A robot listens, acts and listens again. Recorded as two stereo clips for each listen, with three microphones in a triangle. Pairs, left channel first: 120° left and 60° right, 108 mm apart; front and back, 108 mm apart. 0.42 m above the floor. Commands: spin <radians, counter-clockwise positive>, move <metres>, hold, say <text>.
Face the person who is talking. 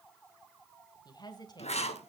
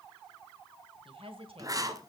spin 2.88
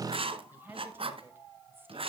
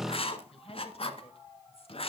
spin 0.17
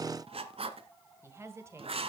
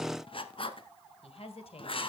say Facing the woman speaking, 1 to 2 m away.